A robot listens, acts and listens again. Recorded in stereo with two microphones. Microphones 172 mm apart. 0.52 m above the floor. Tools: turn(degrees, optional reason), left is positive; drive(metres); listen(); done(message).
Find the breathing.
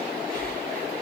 turn(degrees=50, reason="The breathing: about 50° left or 130° left.")
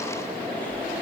turn(degrees=10, reason="So it is at 10° left.")
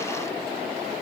listen()
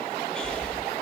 done("Facing the breathing.")